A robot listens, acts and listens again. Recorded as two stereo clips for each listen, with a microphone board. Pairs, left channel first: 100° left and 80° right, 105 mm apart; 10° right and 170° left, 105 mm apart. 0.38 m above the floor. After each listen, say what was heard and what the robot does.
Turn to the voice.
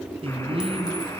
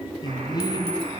The man speaking: 60° right. Turn 60° right.
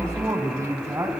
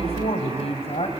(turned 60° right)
The man speaking is now 20° right. Turn 20° right.
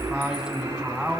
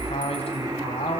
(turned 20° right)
Found it: a man speaking, straight ahead, 2 to 4 m away.